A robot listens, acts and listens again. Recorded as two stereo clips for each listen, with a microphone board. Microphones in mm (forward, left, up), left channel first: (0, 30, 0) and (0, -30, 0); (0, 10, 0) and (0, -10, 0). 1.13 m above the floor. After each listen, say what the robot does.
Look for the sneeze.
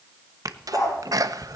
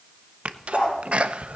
Turn 75° right.
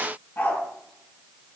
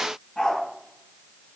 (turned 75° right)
Keep listening.
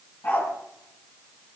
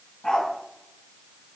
I heard a sneeze, but can't make it out now. It was about straight ahead or 30° right.